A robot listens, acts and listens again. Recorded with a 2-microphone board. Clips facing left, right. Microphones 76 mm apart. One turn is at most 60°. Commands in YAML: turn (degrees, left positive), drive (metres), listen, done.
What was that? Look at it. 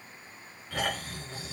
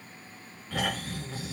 turn: -30
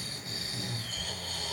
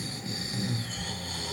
turn: -60
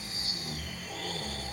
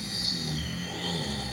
turn: -60
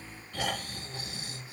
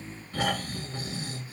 turn: -35
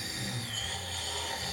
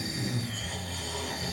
done: "Facing the snoring."